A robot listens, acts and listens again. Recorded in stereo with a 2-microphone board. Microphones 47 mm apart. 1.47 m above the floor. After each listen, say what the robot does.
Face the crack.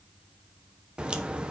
Turn 20° right.
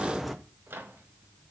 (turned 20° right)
Facing the crack, 1 to 2 m away.